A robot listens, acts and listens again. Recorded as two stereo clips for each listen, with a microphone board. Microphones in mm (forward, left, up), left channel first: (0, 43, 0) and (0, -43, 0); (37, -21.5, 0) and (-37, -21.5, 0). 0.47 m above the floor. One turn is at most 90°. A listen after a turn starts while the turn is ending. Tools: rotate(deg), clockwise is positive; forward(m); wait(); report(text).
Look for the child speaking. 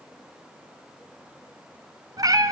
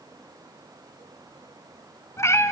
wait()
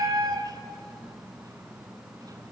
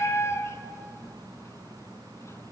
wait()
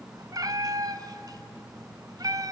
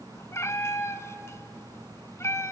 report("I can't make out a child speaking to turn to.")